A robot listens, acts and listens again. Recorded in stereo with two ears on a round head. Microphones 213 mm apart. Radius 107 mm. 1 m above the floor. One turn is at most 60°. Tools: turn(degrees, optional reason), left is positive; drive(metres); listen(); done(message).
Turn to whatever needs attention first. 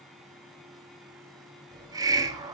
listen()
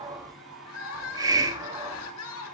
turn(degrees=60, reason="The crying: about 65° left or 115° left.")
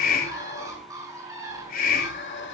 listen()
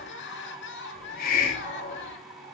turn(degrees=50, reason="So it is at 50° left.")
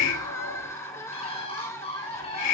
turn(degrees=10, reason="The crying is now 10° left.")
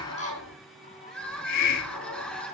done("Found it: crying, straight ahead, 2 to 4 m away.")